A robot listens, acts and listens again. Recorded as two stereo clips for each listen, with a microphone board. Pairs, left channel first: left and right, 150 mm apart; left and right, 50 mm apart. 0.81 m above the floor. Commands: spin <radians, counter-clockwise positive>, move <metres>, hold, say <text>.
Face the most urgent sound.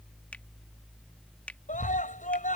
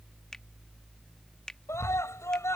spin 1.05
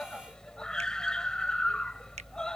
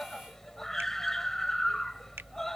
say Facing the scream.